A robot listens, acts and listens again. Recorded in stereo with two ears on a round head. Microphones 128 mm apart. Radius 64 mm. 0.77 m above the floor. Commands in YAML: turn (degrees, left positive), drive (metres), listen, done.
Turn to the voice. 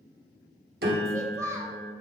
turn: -20
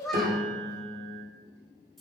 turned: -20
done: "Facing the child speaking."